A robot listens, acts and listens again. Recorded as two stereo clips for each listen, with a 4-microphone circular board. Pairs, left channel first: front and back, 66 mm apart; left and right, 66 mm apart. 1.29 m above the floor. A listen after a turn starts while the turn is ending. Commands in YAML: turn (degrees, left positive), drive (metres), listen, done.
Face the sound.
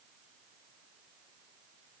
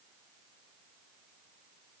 listen: true
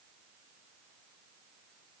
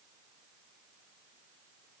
listen: true
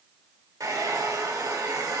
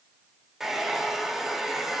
turn: -175
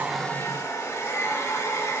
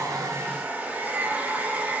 turn: -30
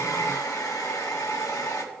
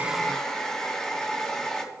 turn: 10
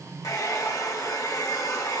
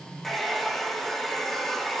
done: "Found it: a hair dryer, straight ahead."